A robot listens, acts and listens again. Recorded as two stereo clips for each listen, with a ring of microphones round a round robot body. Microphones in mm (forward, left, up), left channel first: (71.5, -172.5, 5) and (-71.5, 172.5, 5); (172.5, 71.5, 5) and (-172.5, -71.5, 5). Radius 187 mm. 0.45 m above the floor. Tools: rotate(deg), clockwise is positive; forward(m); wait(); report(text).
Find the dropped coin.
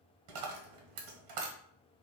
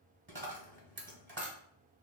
rotate(-140)
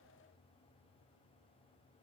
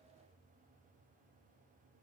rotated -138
report("Facing where the dropped coin came from. I can't hear it now.")